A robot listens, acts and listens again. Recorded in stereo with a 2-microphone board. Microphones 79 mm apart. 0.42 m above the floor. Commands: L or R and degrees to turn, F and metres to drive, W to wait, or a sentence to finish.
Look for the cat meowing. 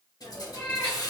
L25
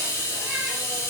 W
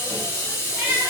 R20
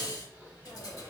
W
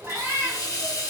R35
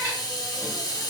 R30
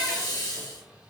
W
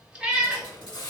R15
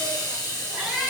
Found it: a cat meowing, straight ahead.